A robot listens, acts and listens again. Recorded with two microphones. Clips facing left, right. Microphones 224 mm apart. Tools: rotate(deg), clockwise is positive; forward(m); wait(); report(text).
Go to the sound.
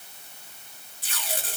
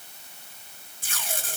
rotate(50)
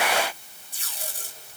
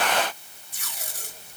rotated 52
rotate(80)
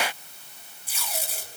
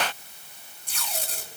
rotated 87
forward(1.0)
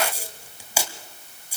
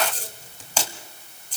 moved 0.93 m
rotate(-10)
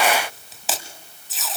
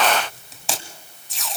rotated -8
forward(1.0)
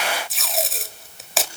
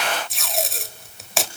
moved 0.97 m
forward(1.0)
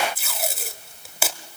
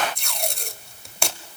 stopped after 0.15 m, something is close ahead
report("I am next to the tape being pulled.")